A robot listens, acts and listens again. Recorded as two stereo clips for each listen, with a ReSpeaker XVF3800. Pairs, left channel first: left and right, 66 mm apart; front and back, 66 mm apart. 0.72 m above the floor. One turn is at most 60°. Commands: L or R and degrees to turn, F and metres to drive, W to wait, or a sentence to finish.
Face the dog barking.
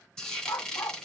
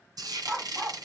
L60
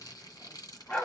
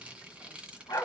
L20
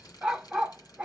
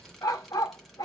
R15
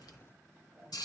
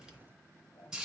W
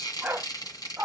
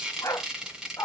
R30
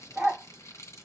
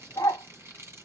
Facing the dog barking.